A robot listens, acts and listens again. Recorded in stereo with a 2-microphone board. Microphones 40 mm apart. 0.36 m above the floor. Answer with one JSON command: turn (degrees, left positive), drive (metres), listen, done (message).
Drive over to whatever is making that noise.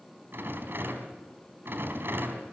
{"turn": -65}
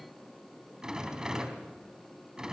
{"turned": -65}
{"turn": -20}
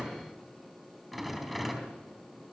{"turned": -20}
{"drive": 1.0}
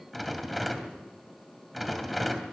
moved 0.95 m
{"drive": 1.0}
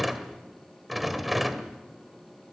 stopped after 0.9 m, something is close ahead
{"done": "Arrived at the rattle, straight ahead."}